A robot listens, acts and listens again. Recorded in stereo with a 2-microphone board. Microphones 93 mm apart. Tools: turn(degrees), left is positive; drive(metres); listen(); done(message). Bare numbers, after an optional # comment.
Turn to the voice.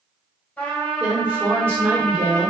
# The woman speaking: about 30° right or 150° right.
turn(-30)
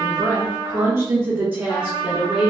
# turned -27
# So it is at 10° right.
turn(-10)
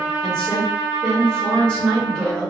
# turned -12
# The woman speaking is now 10° left.
turn(10)
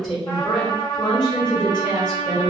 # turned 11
done("Found it: a woman speaking, straight ahead, 1 to 2 m away.")